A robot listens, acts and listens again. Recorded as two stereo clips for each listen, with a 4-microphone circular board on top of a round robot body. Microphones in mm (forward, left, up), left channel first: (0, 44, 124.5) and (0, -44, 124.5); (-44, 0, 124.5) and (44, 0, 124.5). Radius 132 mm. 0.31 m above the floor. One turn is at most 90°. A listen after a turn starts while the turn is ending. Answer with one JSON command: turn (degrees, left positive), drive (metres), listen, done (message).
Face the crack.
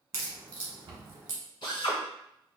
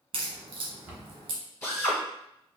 {"turn": -30}
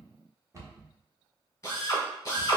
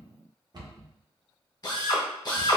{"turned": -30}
{"done": "I heard a crack from this way, but can't make it out now."}